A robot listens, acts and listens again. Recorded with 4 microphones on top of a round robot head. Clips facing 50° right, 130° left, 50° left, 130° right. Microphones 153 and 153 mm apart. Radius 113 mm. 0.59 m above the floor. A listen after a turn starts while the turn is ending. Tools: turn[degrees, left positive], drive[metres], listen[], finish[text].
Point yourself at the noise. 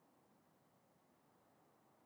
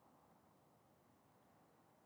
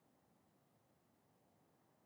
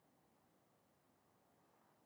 Action: listen[]
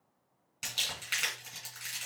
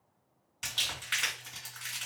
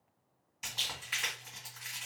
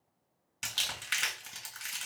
Thought: The crumpling: 130° right.
Action: turn[-130]
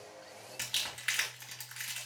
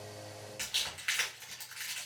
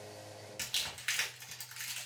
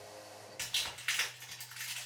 Action: finish[Facing the crumpling, 2 to 4 m away.]